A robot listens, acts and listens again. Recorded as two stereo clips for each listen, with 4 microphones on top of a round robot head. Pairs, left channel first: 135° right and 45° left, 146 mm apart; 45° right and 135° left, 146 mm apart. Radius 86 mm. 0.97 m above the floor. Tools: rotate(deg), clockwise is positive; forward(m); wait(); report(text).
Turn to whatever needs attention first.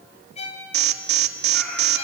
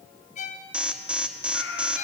rotate(-55)
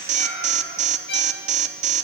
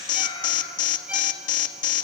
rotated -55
report("Facing the alarm, 1 to 2 m away.")